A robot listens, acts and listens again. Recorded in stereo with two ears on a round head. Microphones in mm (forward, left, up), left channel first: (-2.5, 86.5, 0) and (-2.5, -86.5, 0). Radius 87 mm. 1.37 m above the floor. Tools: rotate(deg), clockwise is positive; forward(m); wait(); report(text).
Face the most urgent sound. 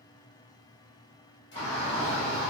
rotate(-15)
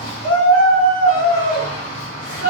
rotate(-150)
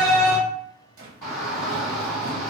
rotate(-15)
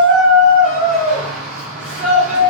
report("Found it: a shout, straight ahead.")